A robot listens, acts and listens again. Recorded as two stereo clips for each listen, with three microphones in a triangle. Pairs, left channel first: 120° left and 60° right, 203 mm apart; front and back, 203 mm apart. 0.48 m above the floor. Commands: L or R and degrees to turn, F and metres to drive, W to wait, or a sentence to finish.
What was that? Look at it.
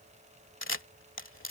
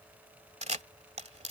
L125
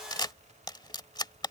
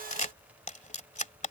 L50
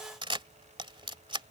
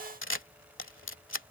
Facing the camera shutter.